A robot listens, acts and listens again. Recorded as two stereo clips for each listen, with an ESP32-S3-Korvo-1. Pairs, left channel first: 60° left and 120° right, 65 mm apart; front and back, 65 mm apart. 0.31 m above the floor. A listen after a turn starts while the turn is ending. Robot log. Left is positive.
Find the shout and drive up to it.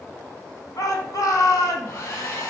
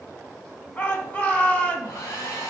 note: The shout: 65° left.
cmd yaw +65
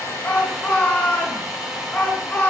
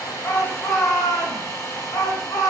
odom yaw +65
cmd fwd 1.0
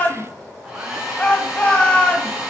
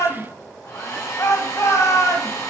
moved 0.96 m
cmd fwd 1.0
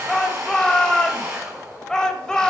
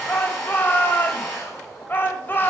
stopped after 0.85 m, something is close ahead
note: The shout is now 10° right.
cmd yaw -10
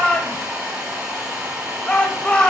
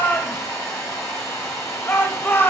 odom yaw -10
end: Arrived at the shout, straight ahead.